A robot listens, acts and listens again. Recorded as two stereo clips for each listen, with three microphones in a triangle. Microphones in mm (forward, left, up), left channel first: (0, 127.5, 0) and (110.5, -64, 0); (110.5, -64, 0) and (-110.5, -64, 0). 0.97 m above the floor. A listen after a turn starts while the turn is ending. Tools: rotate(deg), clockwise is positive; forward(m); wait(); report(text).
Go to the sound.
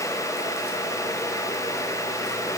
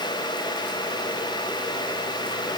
wait()
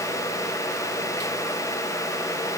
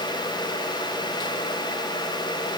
wait()
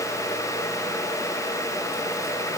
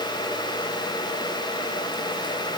report("I can't make out anything.")